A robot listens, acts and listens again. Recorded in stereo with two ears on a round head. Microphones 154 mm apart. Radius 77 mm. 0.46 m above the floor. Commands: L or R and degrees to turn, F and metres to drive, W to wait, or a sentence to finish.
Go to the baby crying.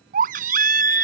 R50
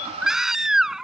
F1.0
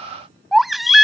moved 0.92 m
F1.0
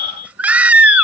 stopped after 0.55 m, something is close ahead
R10
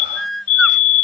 Arrived at the baby crying, straight ahead.